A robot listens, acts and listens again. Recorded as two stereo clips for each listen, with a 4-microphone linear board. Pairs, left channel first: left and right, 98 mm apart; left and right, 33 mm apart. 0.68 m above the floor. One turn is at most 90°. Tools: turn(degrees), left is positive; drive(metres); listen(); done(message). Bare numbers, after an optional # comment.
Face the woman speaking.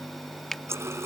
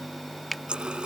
listen()
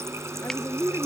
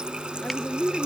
# The woman speaking: about 25° left or 155° left.
turn(25)
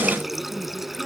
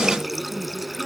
listen()
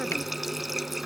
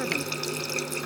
listen()
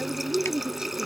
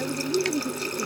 # So it is at 10° right.
turn(-10)
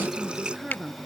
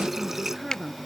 done("Found it: a woman speaking, straight ahead.")